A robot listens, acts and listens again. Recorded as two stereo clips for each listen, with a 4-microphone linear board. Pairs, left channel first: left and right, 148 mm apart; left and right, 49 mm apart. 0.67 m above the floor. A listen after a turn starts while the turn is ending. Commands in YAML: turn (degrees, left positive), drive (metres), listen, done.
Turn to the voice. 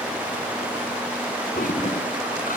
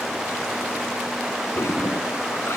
listen: true
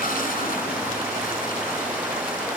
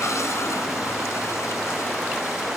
listen: true
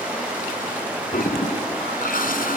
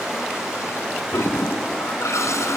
done: "I can't make out anyone speaking, only a toilet flushing."